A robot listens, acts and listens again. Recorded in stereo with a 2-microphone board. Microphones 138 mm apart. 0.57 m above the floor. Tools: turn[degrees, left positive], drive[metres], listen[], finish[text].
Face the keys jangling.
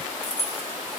Thought: The keys jangling: about 55° right or 125° right.
Action: turn[-55]
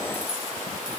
Action: listen[]
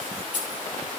Thought: So it is at 80° right.
Action: turn[-80]
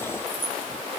Thought: The keys jangling is now 15° right.
Action: turn[-15]
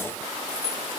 Action: finish[Found it: keys jangling, straight ahead, over 4 m away.]